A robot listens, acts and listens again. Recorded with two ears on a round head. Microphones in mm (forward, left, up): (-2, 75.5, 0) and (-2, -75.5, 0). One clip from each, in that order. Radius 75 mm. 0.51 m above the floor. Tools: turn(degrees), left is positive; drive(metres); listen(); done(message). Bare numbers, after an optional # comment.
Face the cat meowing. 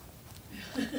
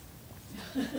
listen()
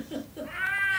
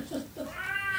# The cat meowing: about 65° left or 115° left.
turn(65)
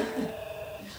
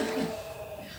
# So it is at 50° left.
turn(50)
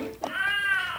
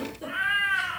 done("Found it: a cat meowing, straight ahead, 2 to 4 m away.")